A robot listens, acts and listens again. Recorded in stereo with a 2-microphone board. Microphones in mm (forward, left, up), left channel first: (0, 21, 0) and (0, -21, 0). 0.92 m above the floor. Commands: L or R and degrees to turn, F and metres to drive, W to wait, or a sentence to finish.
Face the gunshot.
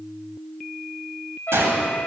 R90
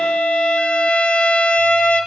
Facing where the gunshot came from. I can't hear it now.